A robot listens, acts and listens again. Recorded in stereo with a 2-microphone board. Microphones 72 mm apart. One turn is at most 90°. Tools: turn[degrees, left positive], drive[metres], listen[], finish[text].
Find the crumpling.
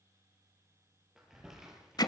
Action: turn[-30]
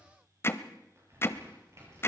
Thought: So it is at 140° right.
Action: turn[-90]
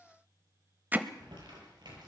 Thought: The crumpling is now 80° right.
Action: turn[-80]
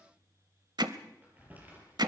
Thought: The crumpling is now 25° right.
Action: turn[-25]
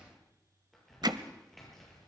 Action: finish[Found it: crumpling, straight ahead.]